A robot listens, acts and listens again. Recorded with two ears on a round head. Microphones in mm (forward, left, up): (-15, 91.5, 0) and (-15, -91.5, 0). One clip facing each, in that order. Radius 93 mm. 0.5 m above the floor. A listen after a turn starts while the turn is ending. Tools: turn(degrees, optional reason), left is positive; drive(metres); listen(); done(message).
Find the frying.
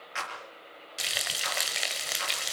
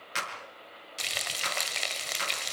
turn(degrees=30)
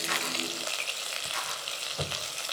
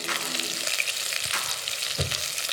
turn(degrees=-25, reason="So it is at 25° right.")
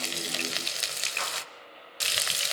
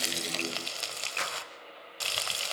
turn(degrees=20, reason="The frying is now 20° left.")
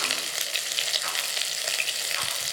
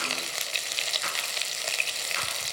done("Found it: frying, straight ahead.")